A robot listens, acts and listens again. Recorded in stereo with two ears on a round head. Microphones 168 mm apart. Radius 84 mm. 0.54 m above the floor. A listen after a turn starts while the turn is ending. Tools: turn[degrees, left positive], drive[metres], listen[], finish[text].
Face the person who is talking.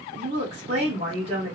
Thought: The woman speaking: about 35° right or 145° right.
Action: turn[-35]
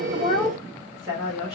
Action: finish[Facing the woman speaking.]